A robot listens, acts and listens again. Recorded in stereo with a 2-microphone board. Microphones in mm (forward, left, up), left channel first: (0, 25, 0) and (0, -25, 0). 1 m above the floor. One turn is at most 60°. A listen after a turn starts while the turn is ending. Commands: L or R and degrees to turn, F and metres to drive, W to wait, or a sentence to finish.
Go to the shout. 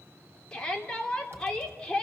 L30
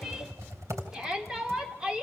R15
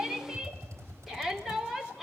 F1.0
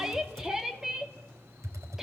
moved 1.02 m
R10
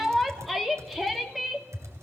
F1.0
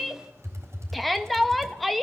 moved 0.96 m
F1.0
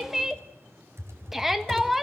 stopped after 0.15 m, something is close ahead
R10
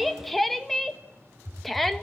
Arrived at the shout, straight ahead.